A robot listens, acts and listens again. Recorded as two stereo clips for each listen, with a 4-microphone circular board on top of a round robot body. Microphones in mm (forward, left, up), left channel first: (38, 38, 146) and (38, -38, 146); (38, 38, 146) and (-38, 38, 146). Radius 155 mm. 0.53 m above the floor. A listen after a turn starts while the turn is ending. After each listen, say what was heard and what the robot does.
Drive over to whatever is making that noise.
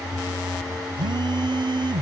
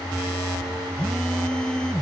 The phone buzzing: 80° right. Turn 80° right.
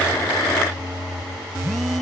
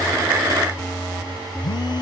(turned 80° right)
Drive 1.0 m forward.
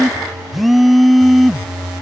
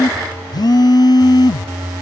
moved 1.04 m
Drive 1.0 m forward.
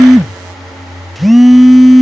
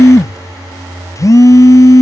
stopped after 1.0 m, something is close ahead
Arrived at the phone buzzing, straight ahead.